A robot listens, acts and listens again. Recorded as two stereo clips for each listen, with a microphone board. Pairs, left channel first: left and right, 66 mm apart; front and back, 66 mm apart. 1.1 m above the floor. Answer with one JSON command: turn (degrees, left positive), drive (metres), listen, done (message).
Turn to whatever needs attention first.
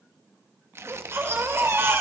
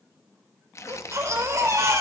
{"turn": -135}
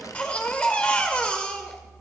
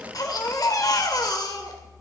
{"turn": 20}
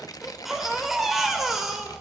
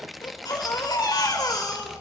{"done": "Found it: a baby crying, straight ahead, 2 to 4 m away."}